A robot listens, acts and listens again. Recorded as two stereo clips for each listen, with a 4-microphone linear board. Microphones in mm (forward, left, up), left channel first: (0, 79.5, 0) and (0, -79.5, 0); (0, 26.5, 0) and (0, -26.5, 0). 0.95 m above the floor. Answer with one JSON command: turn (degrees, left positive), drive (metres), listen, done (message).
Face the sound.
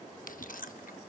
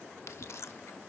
{"turn": 65}
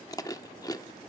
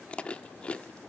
{"turn": 25}
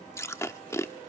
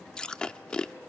{"turn": 20}
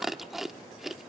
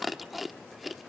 {"done": "Found it: chewing, straight ahead, under 1 m away."}